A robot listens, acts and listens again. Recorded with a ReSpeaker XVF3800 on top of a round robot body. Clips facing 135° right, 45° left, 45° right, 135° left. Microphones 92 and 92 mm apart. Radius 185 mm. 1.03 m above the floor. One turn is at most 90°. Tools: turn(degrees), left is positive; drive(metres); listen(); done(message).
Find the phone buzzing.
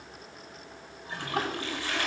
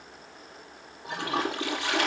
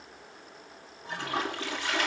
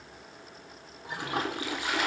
listen()
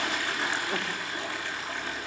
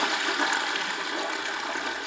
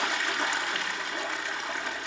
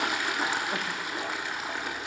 listen()
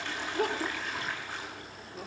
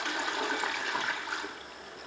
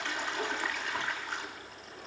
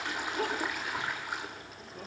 done("I can't make out a phone buzzing to turn to.")